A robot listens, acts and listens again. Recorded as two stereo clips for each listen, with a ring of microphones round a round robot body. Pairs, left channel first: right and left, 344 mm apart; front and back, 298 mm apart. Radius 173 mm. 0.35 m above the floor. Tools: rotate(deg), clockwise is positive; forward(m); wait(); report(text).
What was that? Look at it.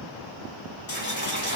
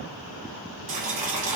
rotate(150)
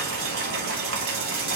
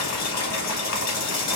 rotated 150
rotate(-35)
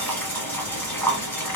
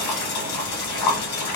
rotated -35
report("Found it: boiling, straight ahead.")